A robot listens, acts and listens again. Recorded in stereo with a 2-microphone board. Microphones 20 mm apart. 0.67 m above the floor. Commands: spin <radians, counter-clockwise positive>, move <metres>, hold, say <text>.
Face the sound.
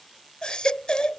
spin 0.79
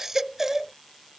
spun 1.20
spin -0.35
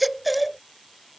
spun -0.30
say Facing the baby crying.